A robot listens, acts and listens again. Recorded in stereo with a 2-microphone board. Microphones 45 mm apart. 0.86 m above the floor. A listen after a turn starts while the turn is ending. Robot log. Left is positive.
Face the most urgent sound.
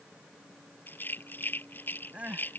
note: The crying: about 30° right or 150° right.
cmd yaw -30
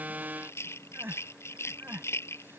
note: So it is at 115° right.
cmd yaw -115
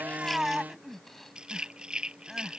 end: Found it: crying, straight ahead.